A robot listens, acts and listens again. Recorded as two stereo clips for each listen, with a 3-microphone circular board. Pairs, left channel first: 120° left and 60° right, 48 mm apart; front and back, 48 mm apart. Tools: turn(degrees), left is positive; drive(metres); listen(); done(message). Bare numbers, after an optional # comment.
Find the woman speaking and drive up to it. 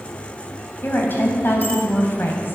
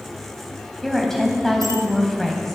# The woman speaking: 80° left.
turn(80)
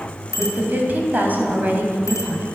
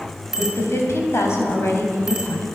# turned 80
# The woman speaking is now 10° right.
turn(-10)
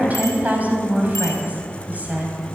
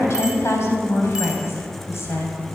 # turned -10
drive(1.0)
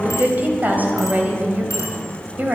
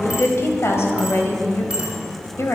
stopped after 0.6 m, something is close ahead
# The woman speaking is now 10° right.
turn(-10)
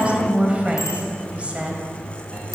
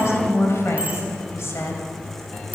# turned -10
done("Something is in my way. I am facing the woman speaking but have not reached it.")